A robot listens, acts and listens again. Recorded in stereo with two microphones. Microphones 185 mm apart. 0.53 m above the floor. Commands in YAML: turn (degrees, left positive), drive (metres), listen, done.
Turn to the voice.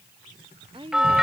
turn: -30
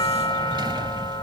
listen: true
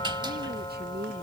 turn: -125
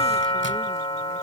listen: true
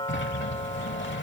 listen: true
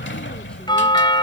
done: "I heard a woman speaking from this way, but can't make it out now."